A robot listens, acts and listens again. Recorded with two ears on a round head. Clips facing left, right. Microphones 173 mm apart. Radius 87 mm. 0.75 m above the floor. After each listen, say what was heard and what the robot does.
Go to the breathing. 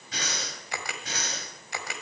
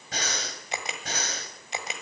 The breathing: about 40° right or 140° right. Turn 40° right.
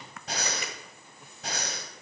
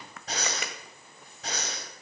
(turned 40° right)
Drive 1.0 m forward.
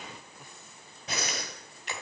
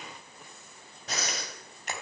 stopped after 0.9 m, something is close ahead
Blocked. The breathing is further on, straight ahead.